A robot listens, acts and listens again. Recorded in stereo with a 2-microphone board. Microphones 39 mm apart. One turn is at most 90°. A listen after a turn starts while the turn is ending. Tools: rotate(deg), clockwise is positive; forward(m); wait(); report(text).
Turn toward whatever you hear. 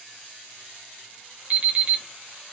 rotate(30)
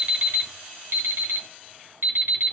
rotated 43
rotate(90)
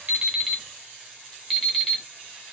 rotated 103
report("Found it: an alarm clock, straight ahead.")